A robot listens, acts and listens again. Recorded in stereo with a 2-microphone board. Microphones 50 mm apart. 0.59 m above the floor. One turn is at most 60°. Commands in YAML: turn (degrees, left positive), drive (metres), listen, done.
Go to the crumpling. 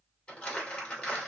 turn: 20
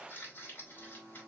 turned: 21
turn: 60
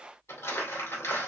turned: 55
turn: 60
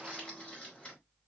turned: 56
turn: 25
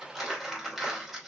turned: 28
drive: 1.0
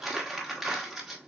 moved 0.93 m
turn: -10
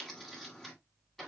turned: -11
drive: 1.0
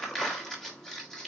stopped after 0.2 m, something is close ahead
turn: 10
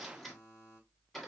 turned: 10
done: "Arrived at the crumpling, straight ahead."